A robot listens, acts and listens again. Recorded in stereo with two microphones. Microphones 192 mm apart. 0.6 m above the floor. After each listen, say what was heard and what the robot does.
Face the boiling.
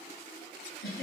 Keep listening.
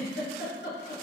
Keep listening.
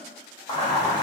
The boiling: about 20° left or 160° left. Turn 20° left.
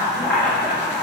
Found it: boiling, straight ahead, 1 to 2 m away.